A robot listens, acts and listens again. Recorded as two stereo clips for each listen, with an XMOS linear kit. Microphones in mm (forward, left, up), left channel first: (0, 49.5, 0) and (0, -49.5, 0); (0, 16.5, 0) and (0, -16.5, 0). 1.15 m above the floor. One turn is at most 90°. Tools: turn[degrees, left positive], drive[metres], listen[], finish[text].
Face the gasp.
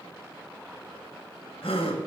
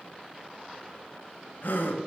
Thought: The gasp: about 65° left or 115° left.
Action: turn[65]
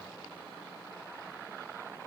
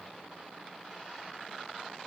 Action: listen[]
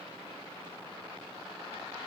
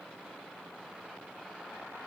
Action: finish[I heard a gasp, but can't make it out now. It was about straight ahead or 50° left.]